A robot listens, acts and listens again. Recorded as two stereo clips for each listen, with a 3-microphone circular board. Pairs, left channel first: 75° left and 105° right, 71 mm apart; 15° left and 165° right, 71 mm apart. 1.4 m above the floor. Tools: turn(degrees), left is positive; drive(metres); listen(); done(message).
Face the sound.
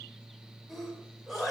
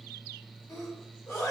turn(degrees=-20)
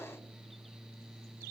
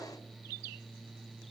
done("Facing where the sneeze came from. I can't hear it now.")